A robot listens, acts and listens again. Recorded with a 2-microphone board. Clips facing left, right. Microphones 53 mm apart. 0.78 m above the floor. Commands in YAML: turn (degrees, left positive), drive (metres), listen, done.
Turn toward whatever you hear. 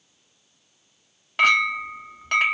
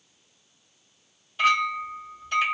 turn: 75
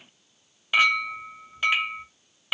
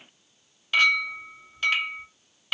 turn: 15
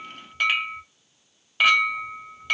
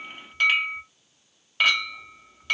done: "Found it: a clink, straight ahead, under 1 m away."